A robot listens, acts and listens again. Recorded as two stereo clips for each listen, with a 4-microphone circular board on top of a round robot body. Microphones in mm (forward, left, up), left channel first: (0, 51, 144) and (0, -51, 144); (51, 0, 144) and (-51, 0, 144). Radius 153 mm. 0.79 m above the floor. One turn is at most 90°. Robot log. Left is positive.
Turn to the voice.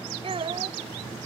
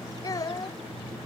note: The child speaking: 55° right.
cmd yaw -55
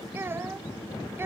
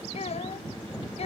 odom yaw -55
note: The child speaking is now 20° right.
cmd yaw -20
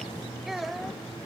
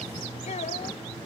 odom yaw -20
end: Found it: a child speaking, straight ahead.